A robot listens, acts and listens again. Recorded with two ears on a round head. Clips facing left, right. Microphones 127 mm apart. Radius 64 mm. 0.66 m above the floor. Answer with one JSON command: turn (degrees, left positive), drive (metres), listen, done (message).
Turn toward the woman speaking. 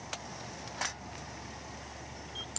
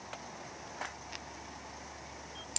{"listen": true}
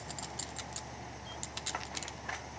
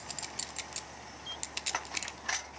{"listen": true}
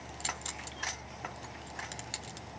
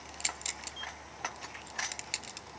{"done": "I can't make out a woman speaking to turn to."}